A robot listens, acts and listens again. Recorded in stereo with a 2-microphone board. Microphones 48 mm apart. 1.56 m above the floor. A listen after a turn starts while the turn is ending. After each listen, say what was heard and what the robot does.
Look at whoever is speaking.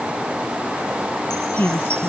The woman speaking: about 45° left or 135° left. Turn 45° left.
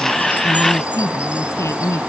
So it is at 90° left. Turn 90° left.
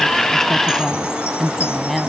Found it: a woman speaking, straight ahead.